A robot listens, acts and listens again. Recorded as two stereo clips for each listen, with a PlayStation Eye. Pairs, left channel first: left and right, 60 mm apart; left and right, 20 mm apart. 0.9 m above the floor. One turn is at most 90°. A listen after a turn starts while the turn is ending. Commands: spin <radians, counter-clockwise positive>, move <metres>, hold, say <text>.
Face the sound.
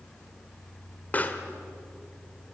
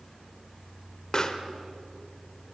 spin 0.52
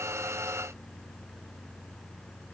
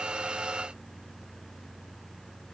hold
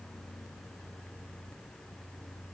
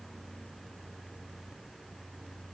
say I heard a pop, but can't make it out now. It was about straight ahead or 120° left.